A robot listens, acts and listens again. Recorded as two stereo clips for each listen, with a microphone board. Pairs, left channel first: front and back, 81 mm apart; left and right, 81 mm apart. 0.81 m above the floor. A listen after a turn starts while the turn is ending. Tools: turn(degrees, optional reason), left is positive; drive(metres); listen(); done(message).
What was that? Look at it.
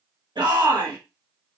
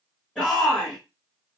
turn(degrees=165, reason="The shout: 165° left.")
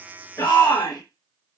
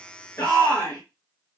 turn(degrees=15, reason="The shout is now 15° left.")
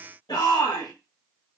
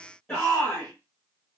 done("Facing the shout, 1 to 2 m away.")